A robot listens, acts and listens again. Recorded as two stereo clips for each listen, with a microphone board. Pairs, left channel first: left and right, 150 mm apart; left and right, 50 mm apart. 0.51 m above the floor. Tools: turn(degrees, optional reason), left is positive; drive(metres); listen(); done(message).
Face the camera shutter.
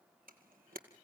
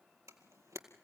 turn(degrees=-90)
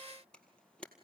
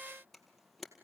done("Facing the camera shutter, 2 to 4 m away.")